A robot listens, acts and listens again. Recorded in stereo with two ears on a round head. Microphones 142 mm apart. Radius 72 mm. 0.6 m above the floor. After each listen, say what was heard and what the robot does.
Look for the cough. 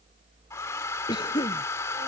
The cough: about 30° left or 150° left. Turn 30° left.
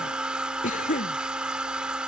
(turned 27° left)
So it is at 125° left. Turn 125° left.
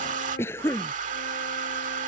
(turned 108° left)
The cough is now 15° left. Turn 15° left.
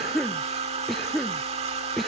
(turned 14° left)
Facing the cough.